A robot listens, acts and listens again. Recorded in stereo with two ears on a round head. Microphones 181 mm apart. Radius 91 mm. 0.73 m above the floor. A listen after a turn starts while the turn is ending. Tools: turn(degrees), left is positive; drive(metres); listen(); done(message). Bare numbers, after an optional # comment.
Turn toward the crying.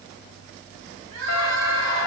turn(-90)
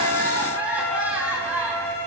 # So it is at 10° right.
turn(-10)
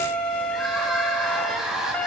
done("Facing the crying, over 4 m away.")